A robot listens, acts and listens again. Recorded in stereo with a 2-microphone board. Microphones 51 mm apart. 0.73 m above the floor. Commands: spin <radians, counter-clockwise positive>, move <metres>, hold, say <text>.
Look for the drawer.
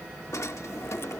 spin 1.57
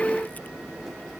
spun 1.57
say Facing the drawer.